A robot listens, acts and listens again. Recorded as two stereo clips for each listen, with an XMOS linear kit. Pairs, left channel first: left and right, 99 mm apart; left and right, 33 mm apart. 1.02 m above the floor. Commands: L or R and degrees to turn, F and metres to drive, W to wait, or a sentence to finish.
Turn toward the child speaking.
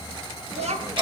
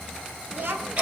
R90
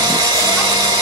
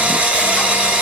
W
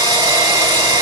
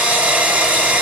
W
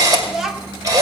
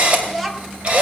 Found it: a child speaking, straight ahead, 1 to 2 m away.